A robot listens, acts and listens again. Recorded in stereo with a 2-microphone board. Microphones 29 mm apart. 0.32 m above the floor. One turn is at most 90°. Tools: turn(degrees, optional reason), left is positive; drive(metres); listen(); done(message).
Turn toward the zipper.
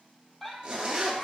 turn(degrees=-30, reason="The zipper: about 30° right or 150° right.")
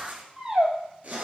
turn(degrees=-90, reason="So it is at 120° right.")
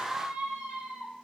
turn(degrees=-30, reason="Nothing new. It was at 30° right.")
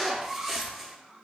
done("Facing the zipper, 1 to 2 m away.")